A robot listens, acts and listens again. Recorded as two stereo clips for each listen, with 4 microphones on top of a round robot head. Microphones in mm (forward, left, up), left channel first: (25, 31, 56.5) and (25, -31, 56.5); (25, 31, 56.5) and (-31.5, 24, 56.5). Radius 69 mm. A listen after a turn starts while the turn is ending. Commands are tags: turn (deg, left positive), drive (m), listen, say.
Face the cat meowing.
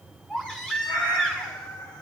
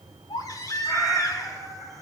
<turn deg="95"/>
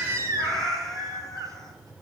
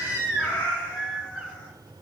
<turn deg="10"/>
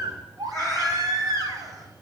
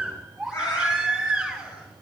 <say>Facing the cat meowing.</say>